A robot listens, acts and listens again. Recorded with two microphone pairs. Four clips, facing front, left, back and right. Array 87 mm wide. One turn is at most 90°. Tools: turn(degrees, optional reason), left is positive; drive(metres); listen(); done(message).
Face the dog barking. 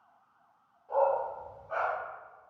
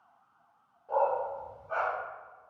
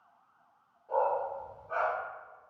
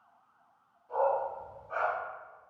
turn(degrees=90, reason="The dog barking: 95° left.")
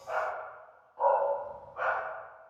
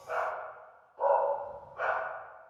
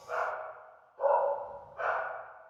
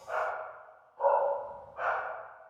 turn(degrees=10, reason="The dog barking is now 10° left.")
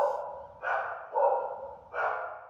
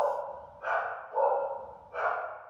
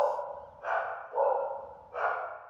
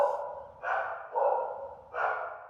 turn(degrees=-10, reason="The dog barking is now 10° right.")
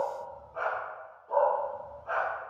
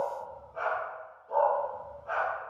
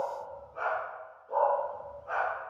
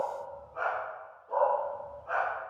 done("Facing the dog barking.")